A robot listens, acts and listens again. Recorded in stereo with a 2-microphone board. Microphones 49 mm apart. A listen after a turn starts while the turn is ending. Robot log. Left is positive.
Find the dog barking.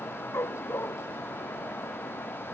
note: The dog barking: about 55° left or 125° left.
cmd yaw +55
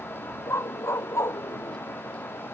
note: So it is at 75° left.
cmd yaw +75
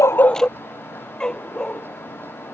note: The dog barking is now 20° left.
cmd yaw +20
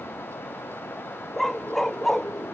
end: Facing the dog barking.